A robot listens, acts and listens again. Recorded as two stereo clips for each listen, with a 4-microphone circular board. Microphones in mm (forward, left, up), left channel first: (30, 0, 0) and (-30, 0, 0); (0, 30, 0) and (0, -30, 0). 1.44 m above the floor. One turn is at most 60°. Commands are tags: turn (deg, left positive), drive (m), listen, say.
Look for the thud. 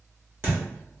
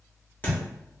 <turn deg="60"/>
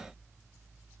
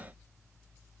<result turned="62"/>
<turn deg="60"/>
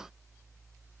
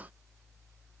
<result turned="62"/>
<turn deg="25"/>
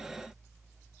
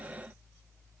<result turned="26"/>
<say>I heard a thud from this way, but can't make it out now.</say>